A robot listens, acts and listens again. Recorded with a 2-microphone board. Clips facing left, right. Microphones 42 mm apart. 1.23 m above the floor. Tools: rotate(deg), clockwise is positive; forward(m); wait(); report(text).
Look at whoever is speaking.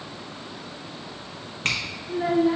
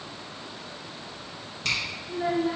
rotate(-30)
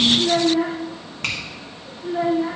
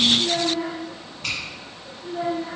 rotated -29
rotate(-140)
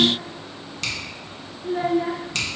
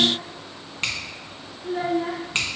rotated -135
report("Facing the child speaking, under 1 m away.")